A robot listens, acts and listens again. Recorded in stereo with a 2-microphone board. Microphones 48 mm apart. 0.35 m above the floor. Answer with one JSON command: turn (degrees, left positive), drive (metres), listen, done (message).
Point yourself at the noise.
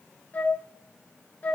{"turn": 35}
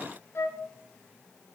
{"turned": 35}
{"turn": 110}
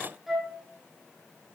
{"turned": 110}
{"done": "Facing the flute."}